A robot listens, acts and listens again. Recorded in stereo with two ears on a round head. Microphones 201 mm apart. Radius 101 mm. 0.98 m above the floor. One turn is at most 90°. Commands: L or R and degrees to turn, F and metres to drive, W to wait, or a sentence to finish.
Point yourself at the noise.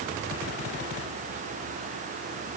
W
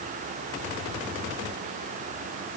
W
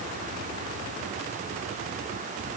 I can't make out anything to turn to.